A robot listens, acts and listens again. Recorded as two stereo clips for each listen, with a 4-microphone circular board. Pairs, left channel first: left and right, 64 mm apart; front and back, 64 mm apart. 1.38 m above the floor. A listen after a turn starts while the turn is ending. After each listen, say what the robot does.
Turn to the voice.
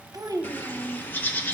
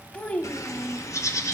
Turn 65° right.
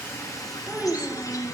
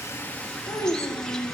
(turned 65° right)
Turn 20° right.
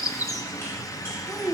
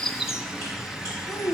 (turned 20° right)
Facing the child speaking.